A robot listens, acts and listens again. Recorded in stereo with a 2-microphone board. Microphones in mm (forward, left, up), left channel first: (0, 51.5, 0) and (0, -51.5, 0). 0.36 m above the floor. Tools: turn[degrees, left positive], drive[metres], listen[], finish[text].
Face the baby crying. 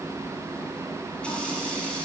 Action: listen[]
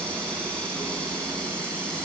Action: listen[]
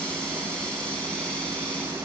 Action: finish[I can't make out a baby crying.]